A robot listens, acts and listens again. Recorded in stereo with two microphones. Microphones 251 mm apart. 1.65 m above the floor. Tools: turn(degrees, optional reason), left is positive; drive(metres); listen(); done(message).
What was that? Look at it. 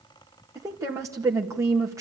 turn(degrees=-30)
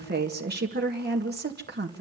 turn(degrees=-140, reason="So it is at 140° right.")
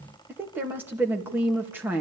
done("Found it: a woman speaking, straight ahead, 2 to 4 m away.")